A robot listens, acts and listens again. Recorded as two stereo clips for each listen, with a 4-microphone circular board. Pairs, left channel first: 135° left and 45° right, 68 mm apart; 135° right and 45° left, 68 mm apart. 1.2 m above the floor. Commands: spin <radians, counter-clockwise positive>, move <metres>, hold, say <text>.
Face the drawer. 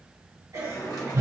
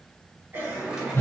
spin 2.09
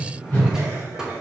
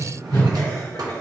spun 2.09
spin 0.61
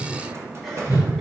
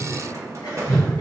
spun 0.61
say Facing the drawer.